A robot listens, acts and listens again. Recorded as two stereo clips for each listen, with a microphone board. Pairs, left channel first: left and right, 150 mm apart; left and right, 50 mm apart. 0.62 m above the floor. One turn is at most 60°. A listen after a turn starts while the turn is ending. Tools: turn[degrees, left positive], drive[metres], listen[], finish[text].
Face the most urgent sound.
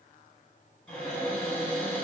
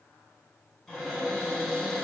Action: listen[]
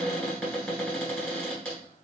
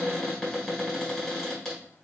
Action: listen[]
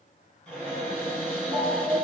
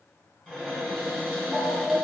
Thought: The alarm: about 55° left or 125° left.
Action: turn[55]
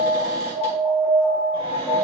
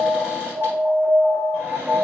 Thought: So it is at 10° left.
Action: turn[10]
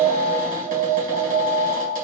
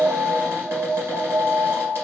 Action: finish[Found it: an alarm, straight ahead.]